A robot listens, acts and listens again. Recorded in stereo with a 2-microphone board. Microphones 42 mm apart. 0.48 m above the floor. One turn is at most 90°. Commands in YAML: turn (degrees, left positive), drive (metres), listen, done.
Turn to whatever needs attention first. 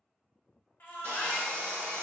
turn: 55
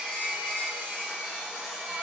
listen: true
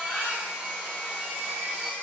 turn: 55
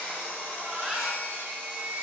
turn: -10
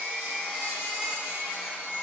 done: "Found it: a baby crying, straight ahead."